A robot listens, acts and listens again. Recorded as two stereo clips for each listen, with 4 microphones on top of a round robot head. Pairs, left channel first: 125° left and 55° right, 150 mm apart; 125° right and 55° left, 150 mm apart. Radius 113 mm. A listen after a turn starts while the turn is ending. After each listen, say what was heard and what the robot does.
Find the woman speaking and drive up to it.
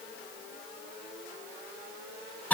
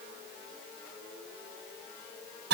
Keep listening.
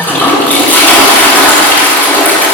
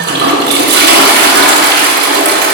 Keep listening.
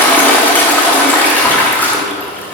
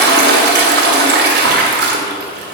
I can't make out a woman speaking to turn to.